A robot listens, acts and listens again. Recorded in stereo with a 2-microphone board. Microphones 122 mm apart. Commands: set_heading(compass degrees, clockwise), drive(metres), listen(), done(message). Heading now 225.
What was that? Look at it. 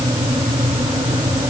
listen()
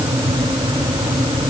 listen()
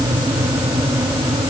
done("I can't make out anything to turn to.")